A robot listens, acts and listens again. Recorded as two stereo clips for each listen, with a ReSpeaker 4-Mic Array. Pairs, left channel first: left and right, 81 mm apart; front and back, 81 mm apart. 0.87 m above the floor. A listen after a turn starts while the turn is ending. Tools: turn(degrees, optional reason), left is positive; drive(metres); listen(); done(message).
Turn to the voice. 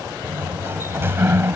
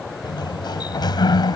listen()
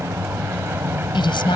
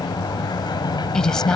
turn(degrees=85, reason="The woman speaking: 85° left.")
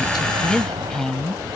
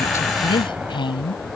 done("Facing the woman speaking.")